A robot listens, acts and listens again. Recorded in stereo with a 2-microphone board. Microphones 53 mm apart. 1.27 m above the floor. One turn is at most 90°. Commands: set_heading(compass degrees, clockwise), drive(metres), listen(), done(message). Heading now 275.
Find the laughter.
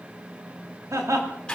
set_heading(345)
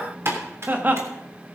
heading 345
set_heading(20)
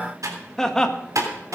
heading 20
set_heading(5)
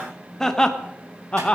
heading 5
set_heading(345)
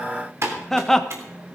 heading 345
done("Facing the laughter.")